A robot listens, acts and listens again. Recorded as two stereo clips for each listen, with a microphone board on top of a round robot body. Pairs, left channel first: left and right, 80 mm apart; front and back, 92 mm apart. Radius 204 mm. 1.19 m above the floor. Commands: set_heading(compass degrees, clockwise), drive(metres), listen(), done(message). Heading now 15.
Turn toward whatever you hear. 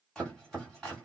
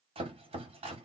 set_heading(200)
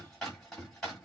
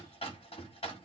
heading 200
done("Facing the chopping.")